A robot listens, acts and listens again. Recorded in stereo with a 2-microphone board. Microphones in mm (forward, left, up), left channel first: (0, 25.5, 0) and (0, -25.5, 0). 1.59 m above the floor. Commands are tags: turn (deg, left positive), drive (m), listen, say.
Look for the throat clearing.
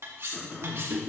<turn deg="35"/>
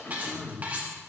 <turn deg="105"/>
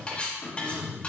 <turn deg="45"/>
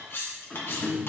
<turn deg="15"/>
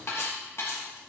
<listen/>
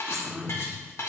<say>Found it: throat clearing, straight ahead.</say>